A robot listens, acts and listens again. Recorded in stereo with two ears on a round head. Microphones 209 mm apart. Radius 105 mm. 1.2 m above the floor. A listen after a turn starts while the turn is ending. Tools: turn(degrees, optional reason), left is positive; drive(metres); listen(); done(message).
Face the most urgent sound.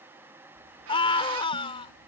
turn(degrees=25, reason="The scream: about 25° left or 155° left.")
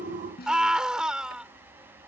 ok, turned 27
done("Facing the scream.")